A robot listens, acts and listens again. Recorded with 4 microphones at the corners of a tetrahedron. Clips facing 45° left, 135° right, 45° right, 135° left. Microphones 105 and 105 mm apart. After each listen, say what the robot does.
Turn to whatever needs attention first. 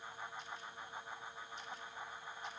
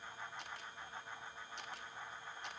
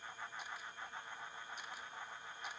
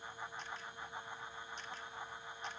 Keep listening.
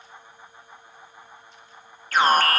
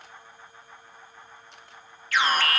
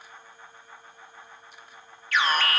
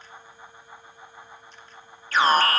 Turn 90° left.
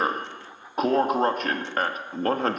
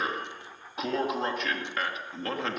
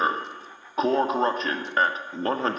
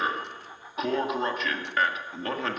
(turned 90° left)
Found it: an alarm, straight ahead.